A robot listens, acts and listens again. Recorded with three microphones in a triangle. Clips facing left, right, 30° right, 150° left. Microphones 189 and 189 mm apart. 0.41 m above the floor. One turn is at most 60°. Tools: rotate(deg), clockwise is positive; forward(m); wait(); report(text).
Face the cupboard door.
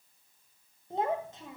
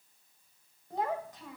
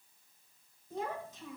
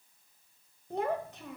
wait()
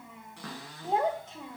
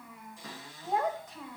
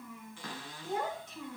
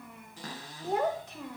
rotate(-60)
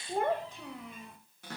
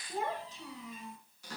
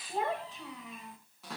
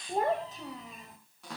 rotate(-60)
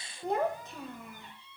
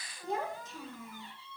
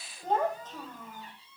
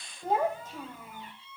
rotate(-20)
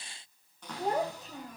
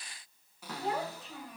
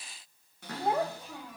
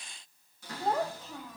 report("Facing the cupboard door.")